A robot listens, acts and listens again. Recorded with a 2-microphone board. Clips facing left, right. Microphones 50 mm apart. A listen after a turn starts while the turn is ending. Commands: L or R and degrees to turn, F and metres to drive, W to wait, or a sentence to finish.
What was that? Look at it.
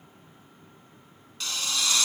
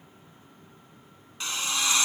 R30
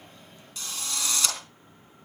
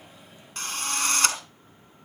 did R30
R125
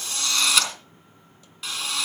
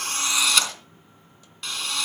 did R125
Facing the drill.